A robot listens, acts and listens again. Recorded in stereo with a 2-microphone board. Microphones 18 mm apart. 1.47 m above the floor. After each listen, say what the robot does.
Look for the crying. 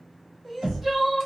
Turn 30° left.
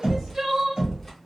Turn 30° right.
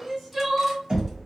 Facing the crying.